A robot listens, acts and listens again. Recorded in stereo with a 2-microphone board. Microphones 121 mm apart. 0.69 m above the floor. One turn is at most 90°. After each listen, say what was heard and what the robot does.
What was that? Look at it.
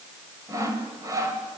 The sawing: about 30° right or 150° right. Turn 30° right.
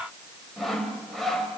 Found it: sawing, straight ahead, 2 to 4 m away.